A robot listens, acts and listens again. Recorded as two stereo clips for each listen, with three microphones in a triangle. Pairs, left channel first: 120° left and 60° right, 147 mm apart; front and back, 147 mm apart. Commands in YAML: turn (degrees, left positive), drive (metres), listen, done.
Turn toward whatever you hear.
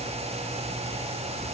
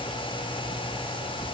listen: true
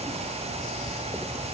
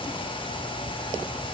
listen: true
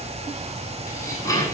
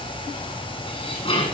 turn: 55
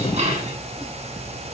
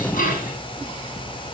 turn: -20
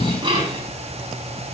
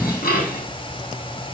done: "Facing the dishes clattering."